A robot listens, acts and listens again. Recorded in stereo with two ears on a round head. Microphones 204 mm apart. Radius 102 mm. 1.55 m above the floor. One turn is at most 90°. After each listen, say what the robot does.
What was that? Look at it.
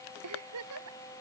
Turn 90° right.
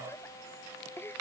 Turn 10° left.
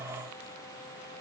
Keep listening.
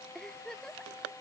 Facing the giggle.